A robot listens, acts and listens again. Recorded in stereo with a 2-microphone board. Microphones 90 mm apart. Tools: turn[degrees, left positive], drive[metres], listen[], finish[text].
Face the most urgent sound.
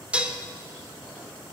Action: listen[]
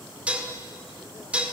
Action: listen[]
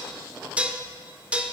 Action: finish[I can't make out anything urgent to turn to.]